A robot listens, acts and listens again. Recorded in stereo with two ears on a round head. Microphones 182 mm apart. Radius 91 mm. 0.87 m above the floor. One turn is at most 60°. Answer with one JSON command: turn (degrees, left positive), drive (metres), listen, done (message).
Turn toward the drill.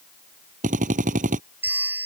{"turn": -40}
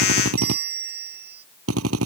{"turn": -60}
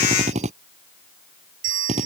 {"turn": -35}
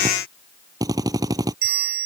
{"turn": -20}
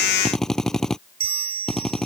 {"done": "Found it: a drill, straight ahead."}